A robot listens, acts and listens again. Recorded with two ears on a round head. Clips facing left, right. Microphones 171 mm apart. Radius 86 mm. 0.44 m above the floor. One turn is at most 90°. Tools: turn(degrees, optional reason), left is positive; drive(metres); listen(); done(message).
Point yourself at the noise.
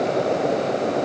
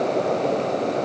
listen()
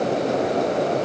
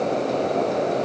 listen()
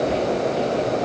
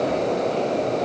done("I can't make out anything to turn to.")